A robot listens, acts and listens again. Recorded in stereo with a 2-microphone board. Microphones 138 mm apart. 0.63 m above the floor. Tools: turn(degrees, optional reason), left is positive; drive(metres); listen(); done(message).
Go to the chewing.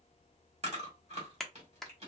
turn(degrees=-50, reason="The chewing: about 50° right or 130° right.")
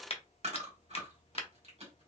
turn(degrees=-65, reason="So it is at 65° right.")
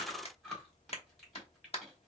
drive(metres=1.0)
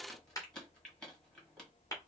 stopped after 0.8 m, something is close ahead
turn(degrees=10, reason="The chewing is now 10° left.")
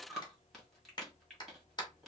done("I am next to the chewing.")